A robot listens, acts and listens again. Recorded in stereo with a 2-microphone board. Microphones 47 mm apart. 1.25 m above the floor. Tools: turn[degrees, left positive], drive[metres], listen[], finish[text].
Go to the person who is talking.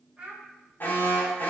Thought: The child speaking: about 15° right or 165° right.
Action: turn[-15]
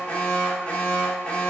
Action: listen[]
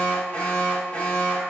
Action: listen[]
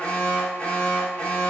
Action: finish[I heard a child speaking, but can't make it out now. It was about straight ahead or 150° right. I did not reach it.]